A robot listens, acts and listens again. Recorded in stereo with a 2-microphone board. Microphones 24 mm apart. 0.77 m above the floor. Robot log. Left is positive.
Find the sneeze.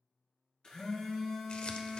cmd idle
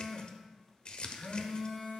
cmd idle
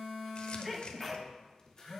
cmd yaw -30
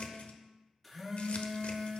cmd idle
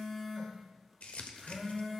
end: I heard a sneeze, but can't make it out now. It was about 25° left or 145° right.